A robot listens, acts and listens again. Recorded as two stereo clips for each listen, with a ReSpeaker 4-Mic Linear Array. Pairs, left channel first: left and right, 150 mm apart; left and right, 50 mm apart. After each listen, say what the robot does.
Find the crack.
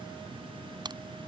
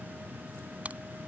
Turn 30° right.
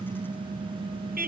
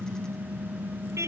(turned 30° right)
Keep listening.
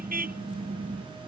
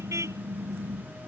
I heard a crack, but can't make it out now. It was about straight ahead or 120° right.